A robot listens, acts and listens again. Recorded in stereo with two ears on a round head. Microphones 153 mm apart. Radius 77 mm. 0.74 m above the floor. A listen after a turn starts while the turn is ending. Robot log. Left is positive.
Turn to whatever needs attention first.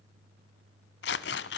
cmd idle
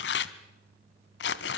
cmd idle
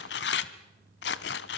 end: I can't make out anything urgent to turn to.